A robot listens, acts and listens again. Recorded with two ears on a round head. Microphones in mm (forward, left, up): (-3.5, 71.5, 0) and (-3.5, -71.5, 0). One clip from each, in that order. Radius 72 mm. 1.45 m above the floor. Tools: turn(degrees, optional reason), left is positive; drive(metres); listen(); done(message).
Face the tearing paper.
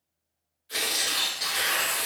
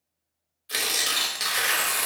turn(degrees=-45, reason="The tearing paper: about 45° right or 135° right.")
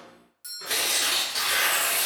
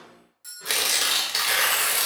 turn(degrees=-85, reason="So it is at 85° right.")
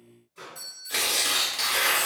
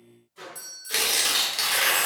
turn(degrees=-30, reason="The tearing paper is now 30° right.")
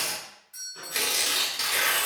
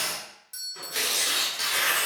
turn(degrees=10, reason="The tearing paper is now 10° left.")
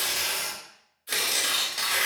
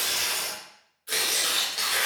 done("Found it: tearing paper, straight ahead, under 1 m away.")